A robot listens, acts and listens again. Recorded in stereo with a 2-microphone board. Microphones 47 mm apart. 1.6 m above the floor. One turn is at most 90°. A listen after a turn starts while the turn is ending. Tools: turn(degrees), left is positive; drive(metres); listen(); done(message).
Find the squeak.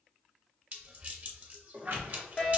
turn(degrees=-60)
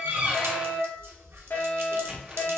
listen()
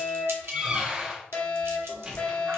turn(degrees=-25)
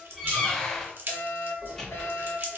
turn(degrees=10)
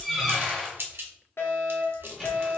done("Found it: a squeak, straight ahead.")